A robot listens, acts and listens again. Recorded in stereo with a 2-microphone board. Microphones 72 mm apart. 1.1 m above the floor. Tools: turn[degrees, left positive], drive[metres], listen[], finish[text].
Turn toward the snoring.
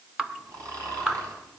Thought: The snoring: about 50° right or 130° right.
Action: turn[-50]
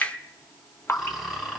Action: finish[Facing the snoring, over 4 m away.]